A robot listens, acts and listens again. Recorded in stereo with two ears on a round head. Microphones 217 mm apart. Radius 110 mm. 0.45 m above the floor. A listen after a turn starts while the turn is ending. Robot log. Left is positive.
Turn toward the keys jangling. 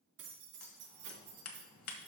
note: The keys jangling: about 50° right or 130° right.
cmd yaw -50
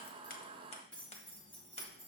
note: So it is at 10° left.
cmd yaw +10
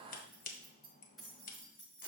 end: Found it: keys jangling, straight ahead, over 4 m away.